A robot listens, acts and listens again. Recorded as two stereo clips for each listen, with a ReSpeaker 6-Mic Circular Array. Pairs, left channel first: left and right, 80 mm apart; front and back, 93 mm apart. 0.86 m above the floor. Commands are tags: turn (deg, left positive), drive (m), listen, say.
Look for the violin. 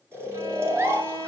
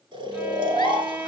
<turn deg="-110"/>
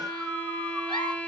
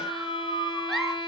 <turn deg="15"/>
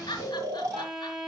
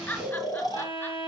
<say>Found it: a violin, straight ahead.</say>